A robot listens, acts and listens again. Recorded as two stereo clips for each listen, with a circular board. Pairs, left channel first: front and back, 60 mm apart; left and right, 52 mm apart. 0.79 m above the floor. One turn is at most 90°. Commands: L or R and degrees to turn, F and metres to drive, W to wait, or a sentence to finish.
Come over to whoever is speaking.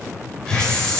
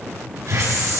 W
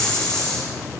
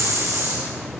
W
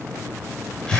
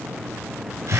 I can't make out anyone speaking to turn to.